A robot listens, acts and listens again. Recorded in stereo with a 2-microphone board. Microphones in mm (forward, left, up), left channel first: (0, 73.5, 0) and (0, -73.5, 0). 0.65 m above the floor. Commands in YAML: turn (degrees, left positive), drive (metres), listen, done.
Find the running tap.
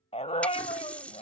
turn: 30
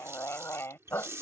turn: -20
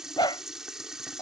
done: "Facing the running tap."